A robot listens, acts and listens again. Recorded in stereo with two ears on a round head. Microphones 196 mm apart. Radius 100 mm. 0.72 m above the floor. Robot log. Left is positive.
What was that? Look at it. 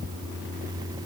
cmd idle
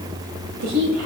cmd yaw -90
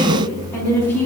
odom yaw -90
note: So it is at 10° left.
cmd yaw +10
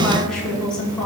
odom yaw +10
end: Found it: a woman speaking, straight ahead, over 4 m away.